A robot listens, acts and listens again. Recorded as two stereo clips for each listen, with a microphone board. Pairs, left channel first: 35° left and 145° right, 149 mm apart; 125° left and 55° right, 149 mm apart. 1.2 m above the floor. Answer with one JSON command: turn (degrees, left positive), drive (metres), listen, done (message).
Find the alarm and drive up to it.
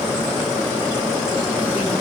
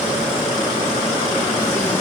{"listen": true}
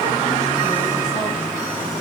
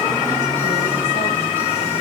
{"listen": true}
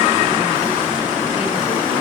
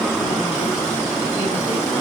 {"done": "I can't make out an alarm to turn to."}